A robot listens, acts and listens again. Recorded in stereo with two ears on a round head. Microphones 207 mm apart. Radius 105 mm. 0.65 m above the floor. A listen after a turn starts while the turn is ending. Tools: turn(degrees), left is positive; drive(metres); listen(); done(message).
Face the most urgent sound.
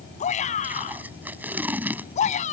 turn(degrees=30)
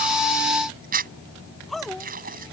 done("Found it: a shout, straight ahead.")